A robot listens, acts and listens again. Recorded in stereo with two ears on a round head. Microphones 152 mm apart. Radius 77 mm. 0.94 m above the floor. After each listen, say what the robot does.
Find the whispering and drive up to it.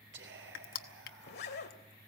Turn 90° right.
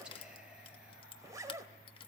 Keep listening.
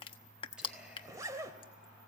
Keep listening.
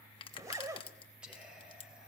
Drive 1.0 m forward.
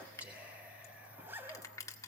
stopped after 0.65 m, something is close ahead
Turn 10° right.
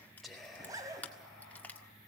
Blocked. The whispering is further on, straight ahead.